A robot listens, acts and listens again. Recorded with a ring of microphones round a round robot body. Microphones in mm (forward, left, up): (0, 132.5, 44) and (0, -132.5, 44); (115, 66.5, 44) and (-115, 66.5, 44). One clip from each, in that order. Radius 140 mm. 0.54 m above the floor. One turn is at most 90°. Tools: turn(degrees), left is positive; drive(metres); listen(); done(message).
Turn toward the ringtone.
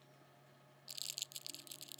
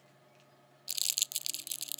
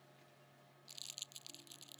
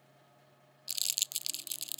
listen()
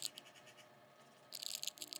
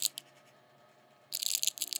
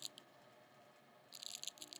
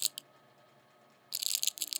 listen()
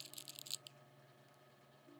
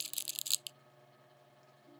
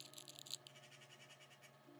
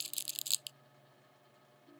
done("I can't make out a ringtone to turn to.")